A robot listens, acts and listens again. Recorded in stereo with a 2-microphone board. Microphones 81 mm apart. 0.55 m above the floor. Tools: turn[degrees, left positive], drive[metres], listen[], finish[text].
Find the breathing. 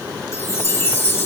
Action: listen[]
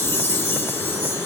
Action: listen[]
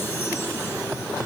Action: finish[I can't make out breathing to turn to.]